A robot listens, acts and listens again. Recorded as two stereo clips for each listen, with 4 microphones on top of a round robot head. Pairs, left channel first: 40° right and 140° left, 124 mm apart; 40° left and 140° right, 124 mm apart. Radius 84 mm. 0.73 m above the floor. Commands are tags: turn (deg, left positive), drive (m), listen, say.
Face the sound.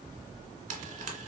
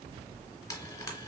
<turn deg="105"/>
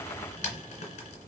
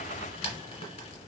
<say>Facing the frying.</say>